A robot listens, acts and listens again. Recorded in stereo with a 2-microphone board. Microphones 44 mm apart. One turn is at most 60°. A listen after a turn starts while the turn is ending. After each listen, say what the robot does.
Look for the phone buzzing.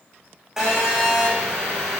Turn 30° right.
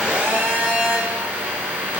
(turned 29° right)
Turn 60° right.
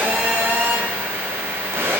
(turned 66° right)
Turn 60° right.
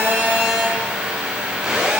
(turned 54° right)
Turn 15° right.
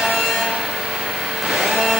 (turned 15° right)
Found it: a phone buzzing, straight ahead, over 4 m away.